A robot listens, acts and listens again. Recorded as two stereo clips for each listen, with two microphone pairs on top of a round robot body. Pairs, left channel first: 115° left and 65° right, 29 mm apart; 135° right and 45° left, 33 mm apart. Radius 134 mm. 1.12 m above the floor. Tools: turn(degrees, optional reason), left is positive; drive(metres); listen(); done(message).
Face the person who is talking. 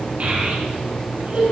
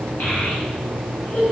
turn(degrees=-100, reason="The child speaking: 100° right.")
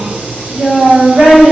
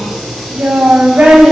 turn(degrees=-10, reason="The child speaking is now 10° right.")
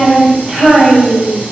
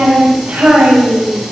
done("Found it: a child speaking, straight ahead, over 4 m away.")